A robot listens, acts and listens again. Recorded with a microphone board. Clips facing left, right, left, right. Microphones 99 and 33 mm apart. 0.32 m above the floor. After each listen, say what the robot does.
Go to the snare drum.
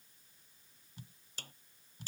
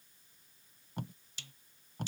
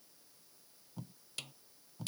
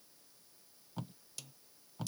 Turn 45° left.
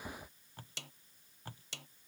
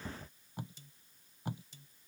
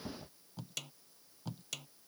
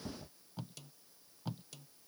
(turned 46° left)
Turn 90° left.
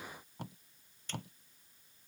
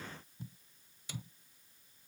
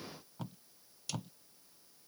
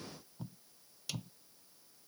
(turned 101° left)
Turn 10° right.
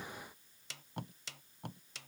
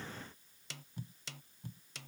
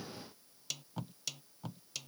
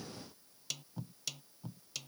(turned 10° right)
Drive 1.0 m forward.
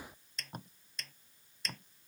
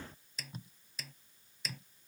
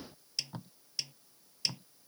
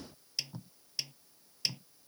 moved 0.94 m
Drive 1.0 m forward.
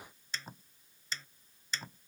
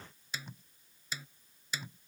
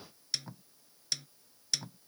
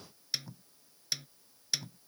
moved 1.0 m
Turn 10° right.
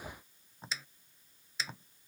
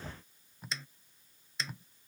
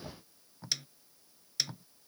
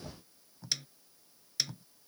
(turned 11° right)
Drive 1.0 m forward.
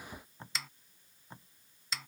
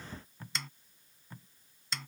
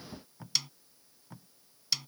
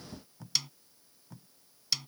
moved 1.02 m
Drive 1.0 m forward.
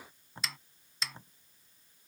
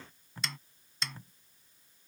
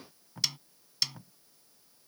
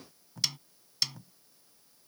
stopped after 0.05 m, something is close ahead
Arrived at the snare drum, straight ahead.